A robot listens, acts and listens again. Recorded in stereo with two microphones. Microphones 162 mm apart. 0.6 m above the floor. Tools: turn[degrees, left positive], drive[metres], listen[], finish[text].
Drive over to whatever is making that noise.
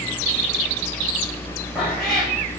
Action: turn[30]
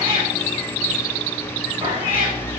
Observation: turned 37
Thought: So it is at 35° right.
Action: turn[-35]
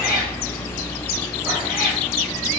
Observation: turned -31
Action: drive[1.0]
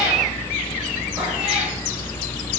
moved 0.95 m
Thought: The cat meowing is now 10° right.
Action: turn[-10]
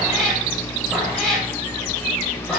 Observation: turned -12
Action: drive[1.0]
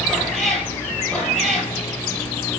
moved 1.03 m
Action: drive[1.0]
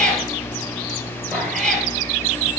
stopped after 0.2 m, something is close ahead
Action: finish[I am next to the cat meowing.]